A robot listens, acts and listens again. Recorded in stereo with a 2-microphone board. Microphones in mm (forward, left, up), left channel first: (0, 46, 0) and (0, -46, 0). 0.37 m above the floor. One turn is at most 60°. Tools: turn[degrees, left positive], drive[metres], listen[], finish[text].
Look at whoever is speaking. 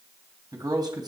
Thought: The man speaking: about 45° right or 135° right.
Action: turn[-45]
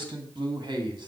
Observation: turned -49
Thought: So it is at 55° right.
Action: turn[-55]
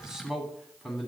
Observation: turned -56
Action: finish[Facing the man speaking, 2 to 4 m away.]